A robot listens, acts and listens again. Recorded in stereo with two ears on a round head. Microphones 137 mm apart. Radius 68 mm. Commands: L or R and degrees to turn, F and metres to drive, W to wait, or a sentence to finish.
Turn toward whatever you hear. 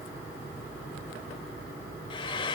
L30
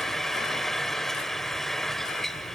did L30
Found it: frying, straight ahead, 1 to 2 m away.